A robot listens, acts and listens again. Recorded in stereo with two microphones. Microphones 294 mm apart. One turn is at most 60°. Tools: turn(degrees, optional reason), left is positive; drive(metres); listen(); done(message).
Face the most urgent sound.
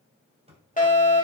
turn(degrees=25, reason="The fire alarm: about 25° left or 155° left.")
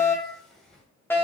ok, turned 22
turn(degrees=10, reason="So it is at 10° left.")
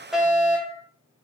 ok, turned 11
done("Found it: a fire alarm, straight ahead.")